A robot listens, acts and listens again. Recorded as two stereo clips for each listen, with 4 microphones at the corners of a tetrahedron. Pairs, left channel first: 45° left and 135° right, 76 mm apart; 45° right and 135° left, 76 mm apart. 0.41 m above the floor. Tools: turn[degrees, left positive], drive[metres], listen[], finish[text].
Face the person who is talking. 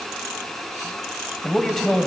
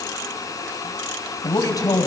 Thought: The man speaking: 35° right.
Action: turn[-35]
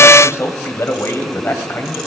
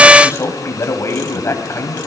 Action: finish[Facing the man speaking, 2 to 4 m away.]